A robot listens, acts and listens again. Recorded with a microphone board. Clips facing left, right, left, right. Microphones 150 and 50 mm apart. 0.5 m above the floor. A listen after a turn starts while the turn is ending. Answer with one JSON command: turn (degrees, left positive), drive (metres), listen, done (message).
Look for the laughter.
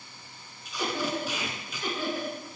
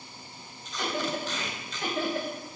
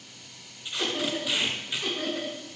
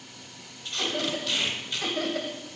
{"turn": -70}
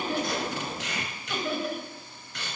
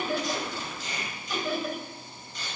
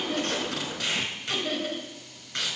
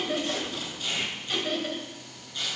{"done": "Found it: laughter, straight ahead, 2 to 4 m away."}